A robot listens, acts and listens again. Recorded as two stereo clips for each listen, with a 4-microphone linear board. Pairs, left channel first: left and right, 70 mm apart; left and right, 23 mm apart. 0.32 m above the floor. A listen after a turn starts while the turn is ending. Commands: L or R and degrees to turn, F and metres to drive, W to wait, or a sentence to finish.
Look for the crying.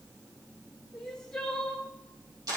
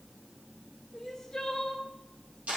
L30
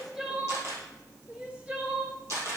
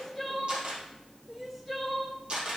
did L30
R20
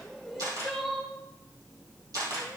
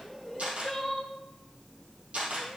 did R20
Found it: crying, straight ahead.